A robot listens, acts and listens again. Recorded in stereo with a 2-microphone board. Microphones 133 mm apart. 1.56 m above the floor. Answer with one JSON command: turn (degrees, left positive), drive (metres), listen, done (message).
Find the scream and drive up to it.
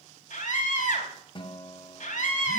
{"turn": 90}
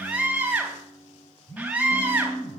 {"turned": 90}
{"turn": -10}
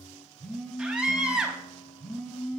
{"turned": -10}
{"drive": 1.0}
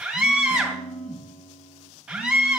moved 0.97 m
{"drive": 1.0}
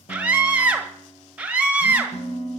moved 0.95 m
{"turn": -10}
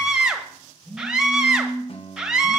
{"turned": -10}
{"drive": 1.0}
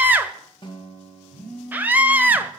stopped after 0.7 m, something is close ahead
{"turn": -15}
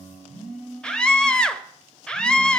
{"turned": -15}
{"done": "I am next to the scream."}